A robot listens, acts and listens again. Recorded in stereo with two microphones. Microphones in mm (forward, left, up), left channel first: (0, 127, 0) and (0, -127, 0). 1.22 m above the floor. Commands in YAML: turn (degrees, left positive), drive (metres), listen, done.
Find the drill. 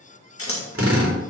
turn: -55
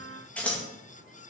listen: true
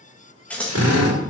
turn: -75
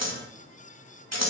listen: true
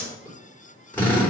done: "Facing the drill, 2 to 4 m away."